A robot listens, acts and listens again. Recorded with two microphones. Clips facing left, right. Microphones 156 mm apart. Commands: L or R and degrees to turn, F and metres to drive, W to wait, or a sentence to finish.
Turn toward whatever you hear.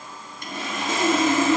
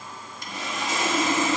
L55
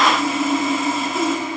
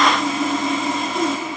Found it: sawing, straight ahead, 1 to 2 m away.